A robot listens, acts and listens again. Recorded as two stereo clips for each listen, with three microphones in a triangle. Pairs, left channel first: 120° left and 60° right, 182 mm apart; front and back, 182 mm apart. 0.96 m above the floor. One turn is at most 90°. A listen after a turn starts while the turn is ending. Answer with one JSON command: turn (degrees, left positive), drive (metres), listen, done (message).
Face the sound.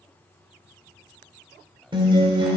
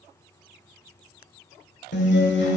{"done": "Found it: a guitar, straight ahead, 1 to 2 m away."}